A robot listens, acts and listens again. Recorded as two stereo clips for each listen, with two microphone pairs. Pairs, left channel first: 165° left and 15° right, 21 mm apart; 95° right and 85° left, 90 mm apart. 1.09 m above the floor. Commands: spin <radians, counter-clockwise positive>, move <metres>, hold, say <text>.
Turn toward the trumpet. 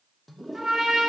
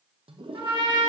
spin 0.87
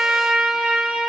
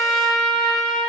spin -0.17
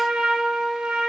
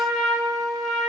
say Facing the trumpet.